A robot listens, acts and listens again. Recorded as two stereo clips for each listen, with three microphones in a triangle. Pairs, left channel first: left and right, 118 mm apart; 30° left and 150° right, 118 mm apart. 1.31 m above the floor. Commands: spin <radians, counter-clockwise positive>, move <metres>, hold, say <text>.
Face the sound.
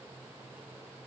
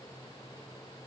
hold
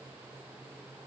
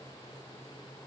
hold
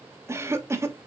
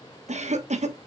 spin -2.79
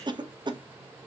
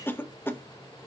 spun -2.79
spin -0.70
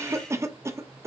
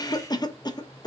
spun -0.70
spin -0.44
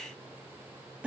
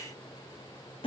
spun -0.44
spin -0.17
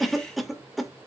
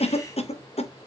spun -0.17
say Found it: a cough, straight ahead.